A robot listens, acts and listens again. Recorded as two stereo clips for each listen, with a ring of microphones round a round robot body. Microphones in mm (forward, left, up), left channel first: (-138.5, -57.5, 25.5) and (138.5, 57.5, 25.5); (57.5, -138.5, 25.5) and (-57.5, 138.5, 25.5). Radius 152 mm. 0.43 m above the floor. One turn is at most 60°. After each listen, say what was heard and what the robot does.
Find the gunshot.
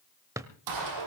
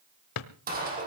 The gunshot: 50° left. Turn 50° left.
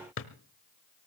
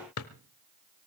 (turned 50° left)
I heard a gunshot from this way, but can't make it out now.